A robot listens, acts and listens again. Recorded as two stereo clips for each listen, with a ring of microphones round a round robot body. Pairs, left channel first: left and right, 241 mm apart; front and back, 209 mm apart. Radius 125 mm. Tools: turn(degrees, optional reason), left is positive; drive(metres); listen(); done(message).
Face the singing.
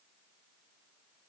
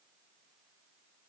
listen()
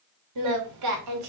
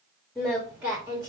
turn(degrees=-100, reason="The singing: 100° right.")
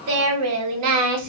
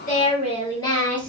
turn(degrees=-85, reason="The singing is now 85° right.")
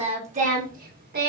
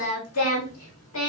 turn(degrees=-40, reason="The singing is now 40° right.")
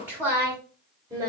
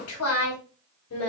turn(degrees=-15, reason="The singing is now 15° right.")
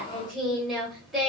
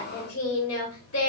done("Found it: singing, straight ahead, 2 to 4 m away.")